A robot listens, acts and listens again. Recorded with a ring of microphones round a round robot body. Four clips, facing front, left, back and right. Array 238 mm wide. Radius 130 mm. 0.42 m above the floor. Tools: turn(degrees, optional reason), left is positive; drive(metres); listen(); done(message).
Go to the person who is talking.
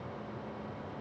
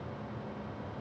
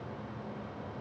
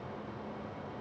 listen()
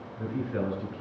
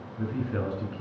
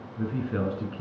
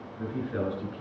turn(degrees=175, reason="The man speaking: 175° left.")
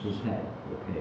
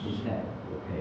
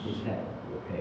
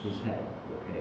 turn(degrees=-30, reason="The man speaking is now 30° right.")
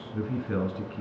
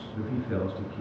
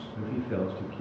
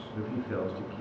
drive(metres=1.0)
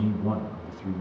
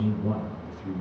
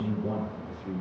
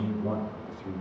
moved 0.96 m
drive(metres=1.0)
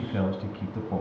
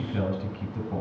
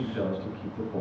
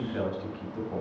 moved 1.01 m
turn(degrees=10, reason="The man speaking is now 10° left.")
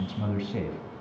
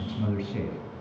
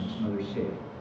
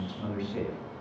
drive(metres=1.0)
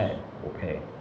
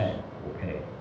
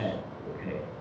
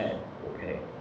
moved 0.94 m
drive(metres=1.0)
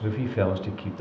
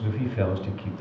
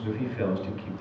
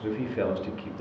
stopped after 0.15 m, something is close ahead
done("I am next to the man speaking.")